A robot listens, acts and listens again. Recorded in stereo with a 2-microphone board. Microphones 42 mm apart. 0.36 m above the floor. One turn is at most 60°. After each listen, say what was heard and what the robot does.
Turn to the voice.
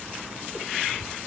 Keep listening.
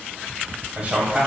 The man speaking: about 35° right or 145° right. Turn 35° right.
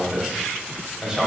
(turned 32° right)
So it is at 10° right. Turn 10° right.
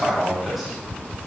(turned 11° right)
Found it: a man speaking, straight ahead.